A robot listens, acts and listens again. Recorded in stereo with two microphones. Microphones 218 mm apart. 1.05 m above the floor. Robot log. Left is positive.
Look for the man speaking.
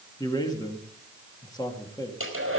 note: The man speaking: about 20° left or 160° left.
cmd yaw +20
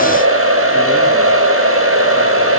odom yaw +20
cmd idle
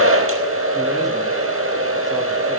cmd idle
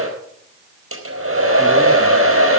end: I heard a man speaking, but can't make it out now. It was about straight ahead or 140° left.